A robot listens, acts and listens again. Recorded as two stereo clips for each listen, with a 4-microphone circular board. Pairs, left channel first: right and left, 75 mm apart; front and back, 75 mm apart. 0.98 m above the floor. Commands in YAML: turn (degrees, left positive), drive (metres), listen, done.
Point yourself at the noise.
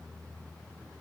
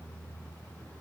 listen: true
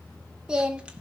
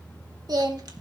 turn: 160
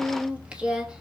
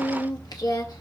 turn: 15
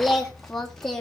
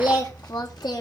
done: "Facing the singing, 2 to 4 m away."